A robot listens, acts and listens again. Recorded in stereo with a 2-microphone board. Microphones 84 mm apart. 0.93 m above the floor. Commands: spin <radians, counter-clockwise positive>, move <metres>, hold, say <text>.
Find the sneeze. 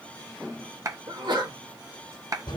spin -1.22
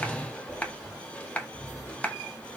hold
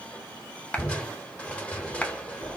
say I heard a sneeze, but can't make it out now. It was about straight ahead or 40° right.